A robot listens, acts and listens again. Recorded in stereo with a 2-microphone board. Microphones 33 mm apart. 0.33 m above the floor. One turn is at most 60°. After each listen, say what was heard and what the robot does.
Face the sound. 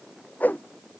The whoosh: about 60° left or 120° left. Turn 60° left.
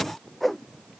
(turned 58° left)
Found it: a whoosh, straight ahead.